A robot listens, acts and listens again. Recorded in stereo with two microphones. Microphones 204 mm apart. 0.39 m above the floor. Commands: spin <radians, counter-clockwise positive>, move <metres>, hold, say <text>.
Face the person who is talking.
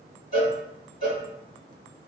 hold
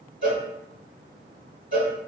hold
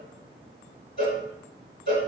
say I can't make out anyone speaking to turn to.